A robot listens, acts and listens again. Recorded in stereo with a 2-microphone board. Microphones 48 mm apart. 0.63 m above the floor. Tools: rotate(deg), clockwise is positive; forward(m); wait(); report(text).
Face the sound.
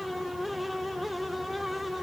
wait()
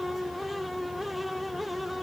wait()
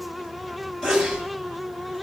rotate(-30)
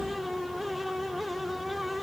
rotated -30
wait()
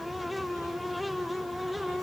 report("I heard a sneeze, but can't make it out now. It was about 15° right or 135° left.")